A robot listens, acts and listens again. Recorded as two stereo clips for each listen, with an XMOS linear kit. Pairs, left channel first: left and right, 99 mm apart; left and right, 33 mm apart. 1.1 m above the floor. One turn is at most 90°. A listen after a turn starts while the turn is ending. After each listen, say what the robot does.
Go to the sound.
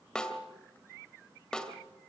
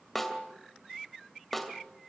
Turn 30° left.
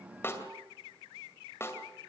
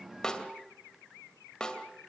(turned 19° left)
Turn 90° left.
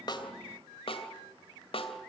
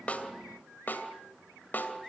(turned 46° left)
Turn 90° left.
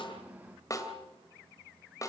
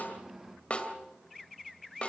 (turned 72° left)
Turn 35° left.
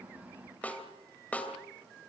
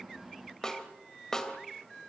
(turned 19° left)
Turn 15° left.
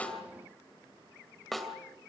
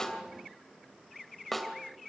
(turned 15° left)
Drive 1.0 m forward.
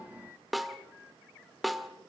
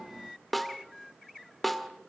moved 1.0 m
Drive 1.0 m forward.
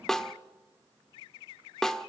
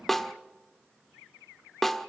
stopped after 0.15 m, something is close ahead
Arrived at the snare drum, straight ahead.